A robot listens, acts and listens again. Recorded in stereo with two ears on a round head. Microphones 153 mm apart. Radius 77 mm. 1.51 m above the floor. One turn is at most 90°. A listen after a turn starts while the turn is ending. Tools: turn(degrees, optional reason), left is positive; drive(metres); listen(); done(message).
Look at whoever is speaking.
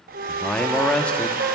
turn(degrees=30)
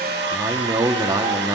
turn(degrees=-25, reason="So it is at 25° right.")
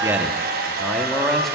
listen()
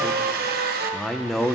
done("Found it: a man speaking, straight ahead.")